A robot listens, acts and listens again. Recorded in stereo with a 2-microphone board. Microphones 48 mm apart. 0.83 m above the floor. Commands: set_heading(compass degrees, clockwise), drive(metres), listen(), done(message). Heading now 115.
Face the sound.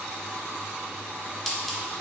set_heading(85)
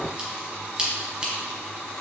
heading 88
set_heading(113)
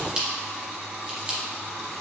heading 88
set_heading(108)
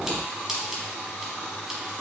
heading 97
set_heading(112)
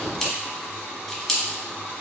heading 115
done("Found it: scissors, straight ahead, under 1 m away.")